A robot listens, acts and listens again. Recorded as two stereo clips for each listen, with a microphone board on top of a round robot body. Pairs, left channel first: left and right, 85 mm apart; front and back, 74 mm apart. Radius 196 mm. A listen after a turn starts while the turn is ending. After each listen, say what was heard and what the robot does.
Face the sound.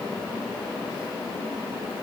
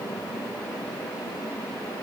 Keep listening.
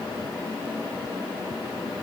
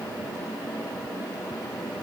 Keep listening.
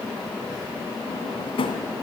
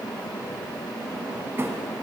The drawer: 115° left. Turn 115° left.
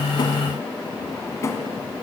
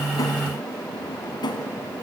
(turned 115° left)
The drawer is now 30° left. Turn 30° left.
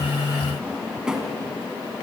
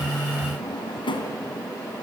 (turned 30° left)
Found it: a drawer, straight ahead, 1 to 2 m away.